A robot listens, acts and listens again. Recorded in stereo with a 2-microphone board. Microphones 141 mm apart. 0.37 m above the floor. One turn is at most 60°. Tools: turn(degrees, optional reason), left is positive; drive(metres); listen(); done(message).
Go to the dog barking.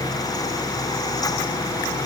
listen()
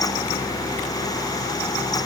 listen()
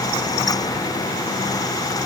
done("I can't make out a dog barking.")